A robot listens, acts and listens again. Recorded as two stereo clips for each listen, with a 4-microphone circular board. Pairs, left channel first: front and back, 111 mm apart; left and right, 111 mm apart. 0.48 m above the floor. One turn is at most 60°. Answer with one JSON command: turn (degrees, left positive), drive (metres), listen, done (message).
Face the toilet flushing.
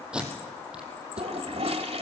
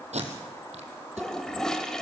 {"turn": 60}
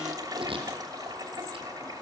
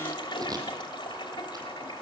{"turn": 60}
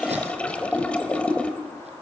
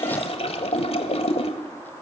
{"turn": 60}
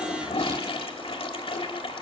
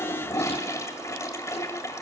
{"turn": 30}
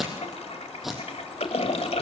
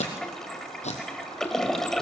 {"done": "Facing the toilet flushing."}